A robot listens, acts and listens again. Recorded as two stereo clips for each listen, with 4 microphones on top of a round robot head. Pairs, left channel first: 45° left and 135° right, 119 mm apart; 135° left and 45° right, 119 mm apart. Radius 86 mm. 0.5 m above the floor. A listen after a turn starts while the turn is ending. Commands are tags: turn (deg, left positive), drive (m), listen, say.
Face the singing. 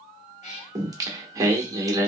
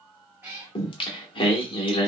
<turn deg="170"/>
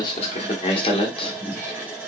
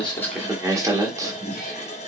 <turn deg="10"/>
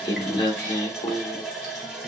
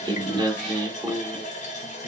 <say>Found it: singing, straight ahead.</say>